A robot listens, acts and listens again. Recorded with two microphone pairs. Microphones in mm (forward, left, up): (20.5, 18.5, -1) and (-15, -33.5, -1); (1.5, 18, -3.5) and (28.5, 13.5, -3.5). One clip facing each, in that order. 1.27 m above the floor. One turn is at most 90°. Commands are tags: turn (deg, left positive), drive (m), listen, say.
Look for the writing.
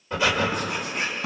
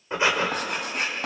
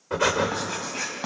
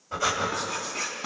<turn deg="-90"/>
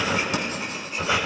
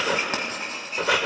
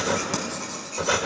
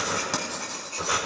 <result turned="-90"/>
<turn deg="-80"/>
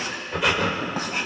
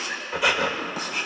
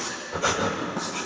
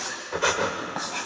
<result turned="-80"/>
<say>Found it: writing, straight ahead.</say>